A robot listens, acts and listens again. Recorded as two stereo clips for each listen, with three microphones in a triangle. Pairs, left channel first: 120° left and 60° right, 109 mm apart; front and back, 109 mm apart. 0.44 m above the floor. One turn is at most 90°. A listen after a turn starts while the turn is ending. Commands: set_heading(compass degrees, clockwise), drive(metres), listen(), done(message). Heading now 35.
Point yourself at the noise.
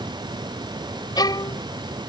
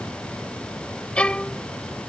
set_heading(315)
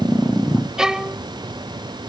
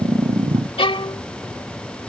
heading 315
set_heading(290)
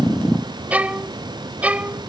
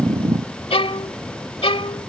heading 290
set_heading(275)
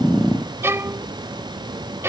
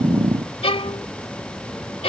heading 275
done("Facing the violin.")